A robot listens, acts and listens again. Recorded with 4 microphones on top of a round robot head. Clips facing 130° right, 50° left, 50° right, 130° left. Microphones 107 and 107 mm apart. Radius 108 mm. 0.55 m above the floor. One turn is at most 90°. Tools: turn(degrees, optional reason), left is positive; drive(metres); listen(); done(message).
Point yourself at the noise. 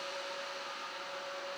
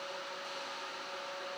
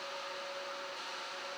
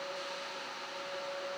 listen()
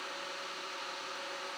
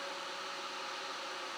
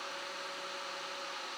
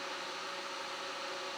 listen()
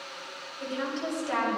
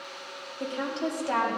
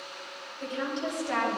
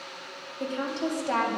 turn(degrees=90, reason="The woman speaking: 90° left.")
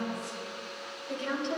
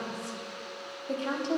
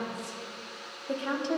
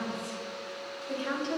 done("Found it: a woman speaking, straight ahead, 2 to 4 m away.")